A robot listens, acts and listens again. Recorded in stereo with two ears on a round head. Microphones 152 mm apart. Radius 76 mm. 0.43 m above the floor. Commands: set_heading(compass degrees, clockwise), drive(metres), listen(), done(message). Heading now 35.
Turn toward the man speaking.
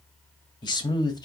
set_heading(10)
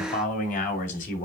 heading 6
set_heading(231)
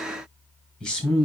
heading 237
done("Found it: a man speaking, straight ahead, 2 to 4 m away.")